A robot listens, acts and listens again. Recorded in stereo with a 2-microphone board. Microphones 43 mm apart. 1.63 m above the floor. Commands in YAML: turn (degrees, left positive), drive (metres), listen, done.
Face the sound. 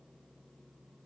listen: true
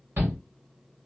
turn: -60
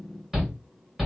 turn: -10
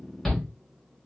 done: "Facing the shout, 1 to 2 m away."